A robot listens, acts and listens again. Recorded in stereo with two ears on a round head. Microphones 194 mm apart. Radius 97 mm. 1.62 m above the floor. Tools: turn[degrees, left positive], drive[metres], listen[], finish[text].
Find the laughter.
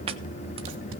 Action: listen[]
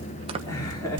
Action: turn[30]
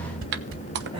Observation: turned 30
Action: listen[]
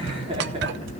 Thought: So it is at 30° right.
Action: turn[-30]
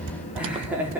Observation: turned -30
Thought: The laughter is now 10° right.
Action: turn[-10]
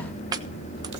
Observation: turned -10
Action: listen[]
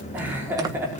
Thought: The laughter is now 10° right.
Action: turn[-10]
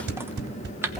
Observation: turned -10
Action: listen[]
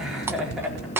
Action: finish[Facing the laughter, over 4 m away.]